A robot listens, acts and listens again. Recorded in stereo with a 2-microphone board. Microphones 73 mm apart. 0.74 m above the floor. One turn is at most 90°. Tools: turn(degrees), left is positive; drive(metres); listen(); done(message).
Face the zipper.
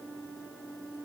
listen()
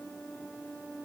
listen()
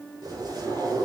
turn(degrees=-75)
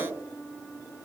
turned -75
turn(degrees=-30)
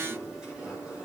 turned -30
turn(degrees=-10)
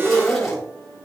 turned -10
done("Facing the zipper.")